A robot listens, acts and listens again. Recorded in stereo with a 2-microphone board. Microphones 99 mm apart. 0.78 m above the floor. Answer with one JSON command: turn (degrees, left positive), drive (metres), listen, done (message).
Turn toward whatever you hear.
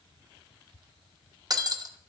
{"turn": -40}
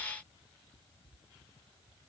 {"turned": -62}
{"listen": true}
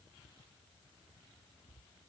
{"done": "I heard breaking glass, but can't make it out now. It was about 20° left or 75° right."}